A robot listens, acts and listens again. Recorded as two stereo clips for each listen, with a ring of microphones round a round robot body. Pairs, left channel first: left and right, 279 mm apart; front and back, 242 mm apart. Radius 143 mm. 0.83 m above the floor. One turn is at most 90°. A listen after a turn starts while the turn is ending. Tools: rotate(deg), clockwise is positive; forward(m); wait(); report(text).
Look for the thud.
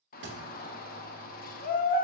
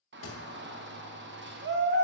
rotate(40)
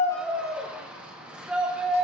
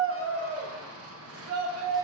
report("Facing where the thud came from. I can't hear it now.")